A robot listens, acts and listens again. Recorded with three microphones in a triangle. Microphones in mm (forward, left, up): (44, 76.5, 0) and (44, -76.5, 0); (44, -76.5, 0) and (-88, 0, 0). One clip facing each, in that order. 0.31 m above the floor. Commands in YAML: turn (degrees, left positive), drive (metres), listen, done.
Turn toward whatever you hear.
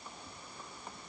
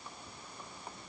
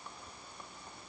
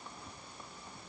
listen: true
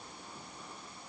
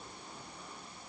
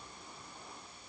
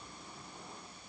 listen: true
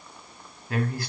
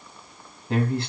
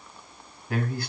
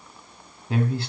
turn: -150
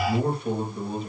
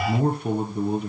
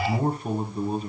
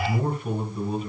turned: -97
turn: -80
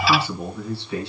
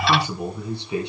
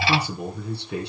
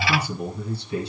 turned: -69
turn: -20
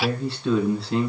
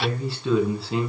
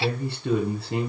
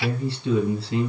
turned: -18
done: "Found it: a man speaking, straight ahead."